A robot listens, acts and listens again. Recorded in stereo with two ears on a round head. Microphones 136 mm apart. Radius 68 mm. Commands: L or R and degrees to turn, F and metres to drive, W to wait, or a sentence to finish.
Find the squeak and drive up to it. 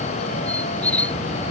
L30
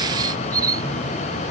R25
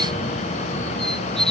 F1.0
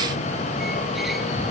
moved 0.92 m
W
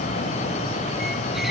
W
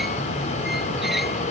Facing where the squeak came from. I can't hear it now. I did not reach it.